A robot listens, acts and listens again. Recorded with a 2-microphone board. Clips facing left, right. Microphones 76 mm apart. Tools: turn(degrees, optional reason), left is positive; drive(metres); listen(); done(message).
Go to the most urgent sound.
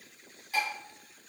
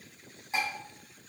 listen()
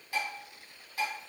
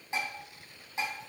listen()
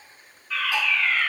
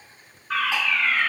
turn(degrees=-55, reason="The fire alarm: about 55° right or 125° right.")
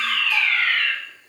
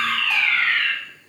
turn(degrees=-45, reason="So it is at 45° right.")
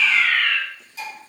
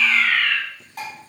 drive(metres=1.0)
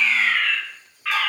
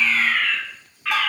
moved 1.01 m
drive(metres=1.0)
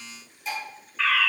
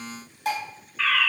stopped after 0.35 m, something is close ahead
done("I am next to the fire alarm.")